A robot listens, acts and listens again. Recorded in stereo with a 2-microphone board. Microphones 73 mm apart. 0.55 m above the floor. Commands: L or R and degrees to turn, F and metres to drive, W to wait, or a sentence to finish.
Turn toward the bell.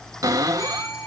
L50
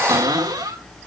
W
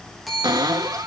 Found it: a bell, straight ahead, over 4 m away.